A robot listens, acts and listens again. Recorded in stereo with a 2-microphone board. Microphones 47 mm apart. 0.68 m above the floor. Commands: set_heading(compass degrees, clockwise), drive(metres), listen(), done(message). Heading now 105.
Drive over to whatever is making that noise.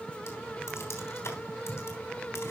set_heading(35)
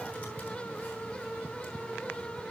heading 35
listen()
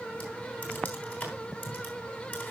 set_heading(355)
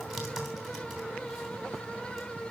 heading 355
drive(1.0)
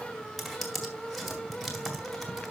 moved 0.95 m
drive(1.0)
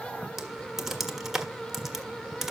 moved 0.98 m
set_heading(5)
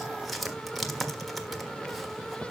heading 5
drive(1.0)
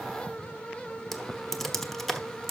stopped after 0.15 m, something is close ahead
done("I am next to the typing on a keyboard.")